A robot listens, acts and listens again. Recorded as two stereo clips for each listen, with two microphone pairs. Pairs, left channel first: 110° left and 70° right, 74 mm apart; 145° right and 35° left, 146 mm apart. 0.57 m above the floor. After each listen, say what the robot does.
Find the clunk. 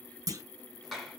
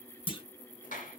Turn 100° right.
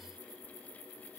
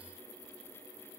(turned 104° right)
Facing where the clunk came from. I can't hear it now.